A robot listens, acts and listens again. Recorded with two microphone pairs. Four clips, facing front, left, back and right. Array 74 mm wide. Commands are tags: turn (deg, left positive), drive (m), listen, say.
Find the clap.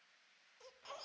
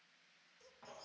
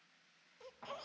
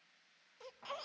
<listen/>
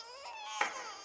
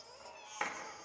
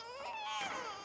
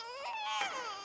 <say>Facing the clap, 2 to 4 m away.</say>